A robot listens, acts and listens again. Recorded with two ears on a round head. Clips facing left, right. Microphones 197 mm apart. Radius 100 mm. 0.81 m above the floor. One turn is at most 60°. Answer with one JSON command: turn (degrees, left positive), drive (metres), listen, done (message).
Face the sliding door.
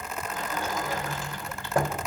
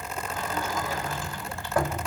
{"turn": 20}
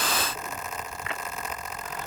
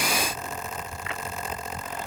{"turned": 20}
{"listen": true}
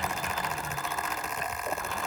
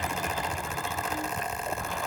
{"listen": true}
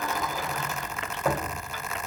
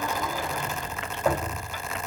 {"done": "Found it: a sliding door, straight ahead, 2 to 4 m away."}